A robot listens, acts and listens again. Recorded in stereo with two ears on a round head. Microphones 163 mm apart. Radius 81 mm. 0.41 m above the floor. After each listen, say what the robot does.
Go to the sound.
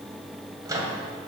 Turn 20° right.
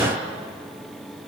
Drive 1.0 m forward.
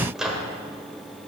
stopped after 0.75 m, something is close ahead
Arrived at the microwave, straight ahead.